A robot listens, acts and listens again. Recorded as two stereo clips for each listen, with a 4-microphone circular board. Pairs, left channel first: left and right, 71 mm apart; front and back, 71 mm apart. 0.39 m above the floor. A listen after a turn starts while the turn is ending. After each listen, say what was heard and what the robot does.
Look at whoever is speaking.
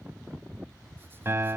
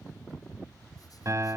Keep listening.
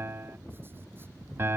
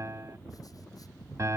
Keep listening.
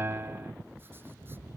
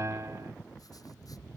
I can't make out anyone speaking to turn to.